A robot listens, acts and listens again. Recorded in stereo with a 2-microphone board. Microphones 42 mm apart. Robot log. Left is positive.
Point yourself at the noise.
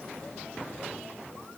cmd idle
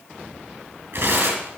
note: The tearing paper: about 70° right or 110° right.
cmd yaw -70
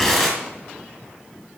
end: Found it: tearing paper, straight ahead.